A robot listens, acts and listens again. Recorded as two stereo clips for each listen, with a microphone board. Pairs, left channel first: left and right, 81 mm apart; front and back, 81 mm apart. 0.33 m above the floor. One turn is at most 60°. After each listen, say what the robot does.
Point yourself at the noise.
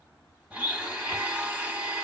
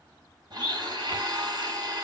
Turn 60° right.
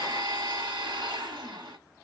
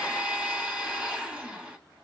Turn 60° right.
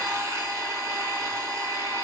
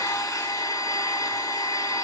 Turn 45° right.
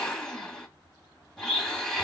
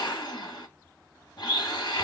Facing the blender, 1 to 2 m away.